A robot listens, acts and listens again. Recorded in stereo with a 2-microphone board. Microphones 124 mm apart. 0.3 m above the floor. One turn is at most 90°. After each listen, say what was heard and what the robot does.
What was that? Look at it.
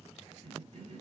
The cough: about 55° right or 125° right. Turn 55° right.
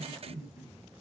So it is at 20° right. Turn 20° right.
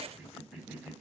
Found it: a cough, straight ahead, 1 to 2 m away.